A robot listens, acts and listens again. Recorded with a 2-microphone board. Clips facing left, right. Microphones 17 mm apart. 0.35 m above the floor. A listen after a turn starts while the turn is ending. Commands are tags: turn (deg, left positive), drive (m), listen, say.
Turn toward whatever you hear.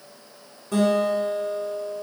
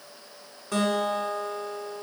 <turn deg="-25"/>
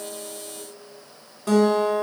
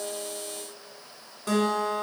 <say>Facing the guitar.</say>